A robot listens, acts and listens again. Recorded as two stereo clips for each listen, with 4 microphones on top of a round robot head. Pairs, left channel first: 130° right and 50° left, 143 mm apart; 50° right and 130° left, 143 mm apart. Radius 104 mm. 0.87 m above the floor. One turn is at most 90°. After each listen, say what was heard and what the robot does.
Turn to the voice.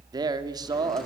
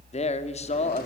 The man speaking: 10° right. Turn 10° right.
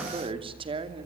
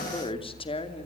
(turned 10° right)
Facing the man speaking, 2 to 4 m away.